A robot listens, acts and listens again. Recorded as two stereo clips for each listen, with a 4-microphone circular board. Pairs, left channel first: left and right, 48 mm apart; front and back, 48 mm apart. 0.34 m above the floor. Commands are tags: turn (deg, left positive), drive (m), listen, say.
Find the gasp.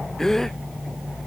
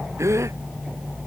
<turn deg="170"/>
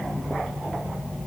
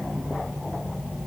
<say>Facing where the gasp came from. I can't hear it now.</say>